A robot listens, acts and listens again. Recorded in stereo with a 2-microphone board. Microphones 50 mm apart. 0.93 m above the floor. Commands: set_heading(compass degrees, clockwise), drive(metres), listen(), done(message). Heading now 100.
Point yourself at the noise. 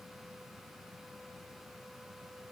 listen()
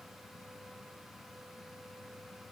listen()
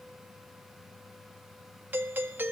set_heading(140)
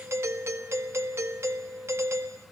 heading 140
set_heading(235)
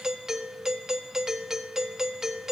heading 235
set_heading(245)
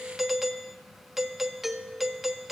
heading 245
done("Found it: a doorbell, straight ahead.")